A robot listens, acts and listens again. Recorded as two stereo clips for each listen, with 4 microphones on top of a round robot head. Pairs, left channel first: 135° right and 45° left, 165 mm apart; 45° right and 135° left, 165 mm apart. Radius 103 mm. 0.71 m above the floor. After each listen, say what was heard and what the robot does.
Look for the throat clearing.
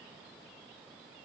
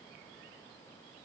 Keep listening.
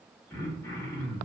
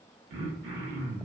The throat clearing: 150° left. Turn 150° left.
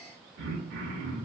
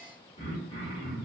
The throat clearing is now 20° left. Turn 20° left.
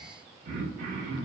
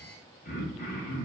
Found it: throat clearing, straight ahead, under 1 m away.